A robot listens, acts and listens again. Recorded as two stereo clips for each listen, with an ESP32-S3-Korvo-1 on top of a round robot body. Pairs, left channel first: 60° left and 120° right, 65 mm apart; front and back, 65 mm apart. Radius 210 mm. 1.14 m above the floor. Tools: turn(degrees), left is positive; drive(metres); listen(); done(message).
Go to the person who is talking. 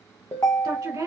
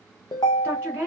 turn(degrees=-120)
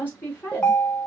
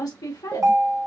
drive(metres=1.0)
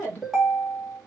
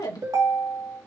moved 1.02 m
drive(metres=1.0)
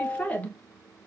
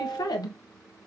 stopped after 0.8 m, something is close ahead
turn(degrees=-10)
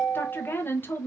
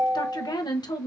done("Arrived at the woman speaking, straight ahead.")